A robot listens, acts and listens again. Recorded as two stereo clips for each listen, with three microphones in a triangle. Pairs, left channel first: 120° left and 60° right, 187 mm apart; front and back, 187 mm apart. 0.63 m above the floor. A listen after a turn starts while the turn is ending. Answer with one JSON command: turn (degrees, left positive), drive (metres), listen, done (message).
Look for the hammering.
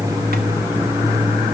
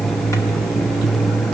{"listen": true}
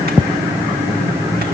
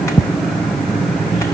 {"listen": true}
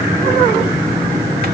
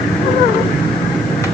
{"done": "I can't make out hammering."}